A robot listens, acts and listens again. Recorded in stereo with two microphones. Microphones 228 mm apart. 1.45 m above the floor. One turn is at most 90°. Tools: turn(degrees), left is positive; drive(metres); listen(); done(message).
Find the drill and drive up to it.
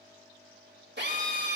turn(degrees=-50)
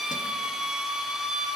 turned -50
drive(metres=1.0)
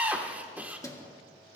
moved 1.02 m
drive(metres=1.0)
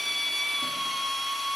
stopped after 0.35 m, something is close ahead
done("Arrived at the drill, straight ahead.")